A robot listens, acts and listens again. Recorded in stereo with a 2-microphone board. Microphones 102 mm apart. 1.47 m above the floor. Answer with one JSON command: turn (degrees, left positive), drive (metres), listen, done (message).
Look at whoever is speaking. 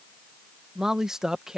{"turn": -30}
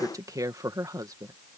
{"turn": -145}
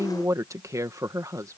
{"turn": -35}
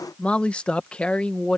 {"turn": 10}
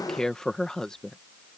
{"done": "Found it: a woman speaking, straight ahead."}